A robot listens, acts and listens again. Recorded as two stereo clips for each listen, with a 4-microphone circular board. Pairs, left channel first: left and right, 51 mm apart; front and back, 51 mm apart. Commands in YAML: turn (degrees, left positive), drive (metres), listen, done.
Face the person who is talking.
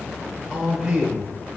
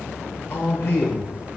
turn: -15
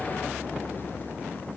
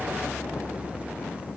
listen: true
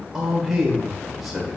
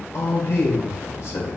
done: "Facing the man speaking."